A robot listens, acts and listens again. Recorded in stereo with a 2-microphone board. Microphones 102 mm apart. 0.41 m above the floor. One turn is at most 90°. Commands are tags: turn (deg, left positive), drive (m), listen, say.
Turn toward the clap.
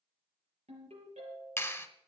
<turn deg="20"/>
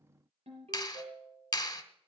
<turn deg="90"/>
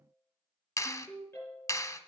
<turn deg="40"/>
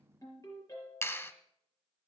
<turn deg="30"/>
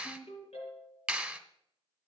<turn deg="-10"/>
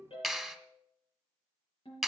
<say>Facing the clap, 1 to 2 m away.</say>